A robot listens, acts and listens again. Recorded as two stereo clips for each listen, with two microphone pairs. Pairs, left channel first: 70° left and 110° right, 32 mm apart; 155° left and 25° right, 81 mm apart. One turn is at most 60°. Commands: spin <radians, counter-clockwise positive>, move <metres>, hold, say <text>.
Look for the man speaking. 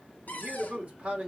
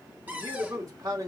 spin -1.05
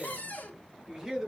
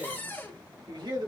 spin -0.61
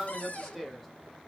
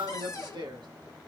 spin -0.35
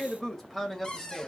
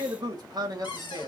spin -0.26
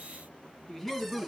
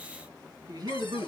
spin -0.26
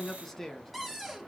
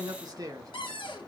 say Found it: a man speaking, straight ahead.